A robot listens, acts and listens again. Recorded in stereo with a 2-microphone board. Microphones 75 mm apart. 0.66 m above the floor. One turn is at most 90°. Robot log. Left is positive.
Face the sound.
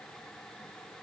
cmd idle
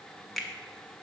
cmd yaw +30
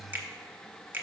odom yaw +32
note: So it is at 35° right.
cmd yaw -35
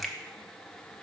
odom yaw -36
cmd idle
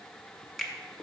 end: Found it: a finger snap, straight ahead.